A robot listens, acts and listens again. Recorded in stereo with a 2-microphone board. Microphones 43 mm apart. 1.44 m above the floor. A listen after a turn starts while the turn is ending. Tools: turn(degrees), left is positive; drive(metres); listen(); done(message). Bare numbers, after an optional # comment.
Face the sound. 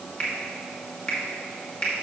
# The finger snap: about 20° left or 160° left.
turn(20)
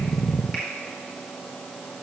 listen()
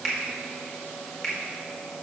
done("Found it: a finger snap, straight ahead.")